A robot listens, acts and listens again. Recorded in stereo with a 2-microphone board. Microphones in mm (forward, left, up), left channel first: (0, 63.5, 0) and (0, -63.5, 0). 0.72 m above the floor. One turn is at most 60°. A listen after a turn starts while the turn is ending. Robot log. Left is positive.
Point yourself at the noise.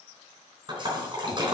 note: The splash: about 40° right or 140° right.
cmd yaw -40
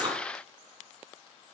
cmd idle
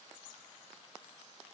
end: I heard a splash, but can't make it out now. It was about straight ahead or 100° right.